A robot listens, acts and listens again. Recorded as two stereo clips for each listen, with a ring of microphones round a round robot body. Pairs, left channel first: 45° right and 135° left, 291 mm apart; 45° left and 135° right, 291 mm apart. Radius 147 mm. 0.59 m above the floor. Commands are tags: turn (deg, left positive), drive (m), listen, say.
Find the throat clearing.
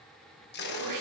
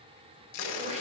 <turn deg="160"/>
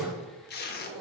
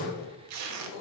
<turn deg="45"/>
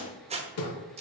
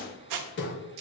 <say>Found it: throat clearing, straight ahead, 1 to 2 m away.</say>